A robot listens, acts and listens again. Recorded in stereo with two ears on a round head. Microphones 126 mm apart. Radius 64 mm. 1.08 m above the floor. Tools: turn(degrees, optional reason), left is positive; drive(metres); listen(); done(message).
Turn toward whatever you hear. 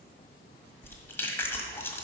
turn(degrees=15, reason="The chewing: about 15° left or 165° left.")
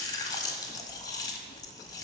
turn(degrees=150, reason="So it is at 150° left.")
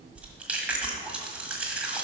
turn(degrees=-10, reason="The chewing is now 10° right.")
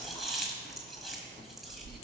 done("Found it: chewing, straight ahead.")